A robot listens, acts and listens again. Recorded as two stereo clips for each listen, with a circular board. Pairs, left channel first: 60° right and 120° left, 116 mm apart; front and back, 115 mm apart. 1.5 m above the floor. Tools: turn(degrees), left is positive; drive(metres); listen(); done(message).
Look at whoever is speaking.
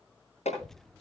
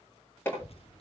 turn(degrees=25)
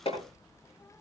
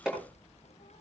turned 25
done("Found it: a child speaking, straight ahead, under 1 m away.")